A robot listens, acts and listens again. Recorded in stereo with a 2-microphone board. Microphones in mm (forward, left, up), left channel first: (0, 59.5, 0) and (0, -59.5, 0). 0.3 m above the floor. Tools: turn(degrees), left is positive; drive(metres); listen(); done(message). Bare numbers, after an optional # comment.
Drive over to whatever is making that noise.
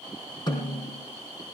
# The snare drum: about 40° left or 140° left.
turn(40)
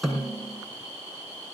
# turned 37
drive(1.0)
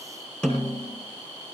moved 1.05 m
drive(1.0)
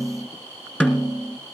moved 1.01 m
# The snare drum is now 15° left.
turn(15)
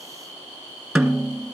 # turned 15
drive(1.0)
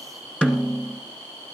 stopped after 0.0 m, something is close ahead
# The snare drum is now 10° left.
turn(10)
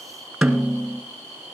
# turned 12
done("Arrived at the snare drum, straight ahead.")